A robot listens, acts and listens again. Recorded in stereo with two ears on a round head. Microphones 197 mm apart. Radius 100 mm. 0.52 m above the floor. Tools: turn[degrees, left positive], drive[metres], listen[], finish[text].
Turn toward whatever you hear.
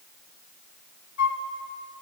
Thought: The flute: about 65° left or 115° left.
Action: turn[65]
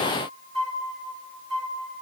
Action: finish[Found it: a flute, straight ahead, 1 to 2 m away.]